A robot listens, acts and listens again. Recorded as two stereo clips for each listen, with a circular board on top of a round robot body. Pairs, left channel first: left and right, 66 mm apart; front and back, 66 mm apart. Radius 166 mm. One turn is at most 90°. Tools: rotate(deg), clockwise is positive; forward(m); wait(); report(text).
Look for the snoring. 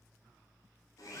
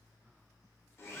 wait()
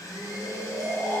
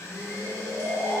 rotate(90)
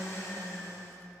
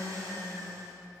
rotate(25)
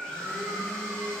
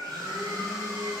report("Facing the snoring, 1 to 2 m away.")